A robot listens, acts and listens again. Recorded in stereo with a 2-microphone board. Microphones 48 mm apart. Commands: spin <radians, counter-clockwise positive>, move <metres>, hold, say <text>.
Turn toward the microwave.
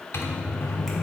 spin 1.22
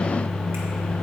spin 0.26
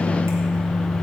say Found it: a microwave, straight ahead.